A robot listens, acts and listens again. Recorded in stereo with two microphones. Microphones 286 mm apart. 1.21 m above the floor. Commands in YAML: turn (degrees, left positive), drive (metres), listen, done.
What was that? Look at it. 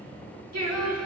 turn: -75
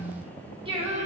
turn: -25
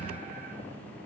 listen: true
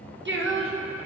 turn: -55
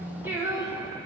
turn: -15
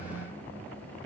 listen: true
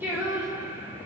turn: -10
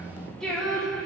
done: "Facing the singing."